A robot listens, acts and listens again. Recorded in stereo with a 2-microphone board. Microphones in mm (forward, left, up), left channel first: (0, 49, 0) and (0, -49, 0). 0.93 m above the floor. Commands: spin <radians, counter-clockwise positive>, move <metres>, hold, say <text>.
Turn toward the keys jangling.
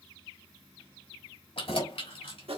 spin 1.57
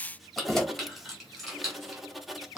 say Facing the keys jangling, 2 to 4 m away.